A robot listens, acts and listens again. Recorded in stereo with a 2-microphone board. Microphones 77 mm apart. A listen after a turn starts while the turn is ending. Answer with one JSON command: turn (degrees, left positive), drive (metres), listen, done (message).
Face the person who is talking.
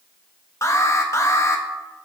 {"listen": true}
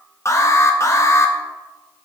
{"listen": true}
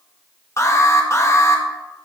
{"done": "I can't make out anyone speaking to turn to."}